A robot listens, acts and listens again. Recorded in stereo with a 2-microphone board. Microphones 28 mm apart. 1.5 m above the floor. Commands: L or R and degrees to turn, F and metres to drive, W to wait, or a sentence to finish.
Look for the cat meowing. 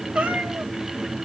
R50
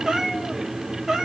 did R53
R15
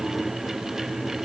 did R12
Facing the cat meowing.